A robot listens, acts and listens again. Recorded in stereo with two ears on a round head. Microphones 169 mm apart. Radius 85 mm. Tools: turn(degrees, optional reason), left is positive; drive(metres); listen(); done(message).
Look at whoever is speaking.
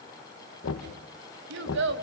turn(degrees=-70, reason="The child speaking: about 70° right or 110° right.")
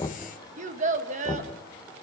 turn(degrees=-40, reason="So it is at 40° right.")
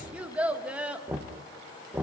turn(degrees=-10, reason="The child speaking is now 10° right.")
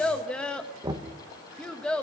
done("Found it: a child speaking, straight ahead, 1 to 2 m away.")